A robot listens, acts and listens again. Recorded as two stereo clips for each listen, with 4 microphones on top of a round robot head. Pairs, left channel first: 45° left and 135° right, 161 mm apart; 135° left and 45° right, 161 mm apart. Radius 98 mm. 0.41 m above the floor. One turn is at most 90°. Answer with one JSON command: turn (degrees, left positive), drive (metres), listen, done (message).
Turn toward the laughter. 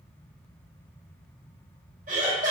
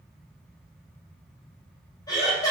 {"turn": -90}
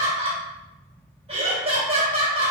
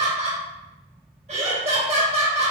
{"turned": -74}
{"turn": -85}
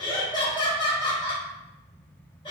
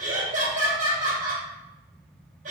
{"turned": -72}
{"turn": -15}
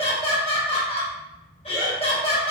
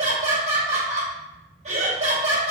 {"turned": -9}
{"done": "Facing the laughter."}